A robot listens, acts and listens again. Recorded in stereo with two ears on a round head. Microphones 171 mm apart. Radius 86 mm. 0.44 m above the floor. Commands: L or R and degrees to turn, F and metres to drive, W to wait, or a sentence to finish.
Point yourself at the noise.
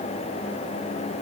W
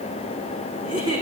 R25
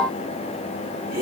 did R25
R130
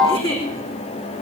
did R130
L30
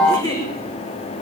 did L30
L20
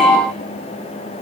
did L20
W
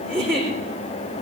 Facing the giggle, over 4 m away.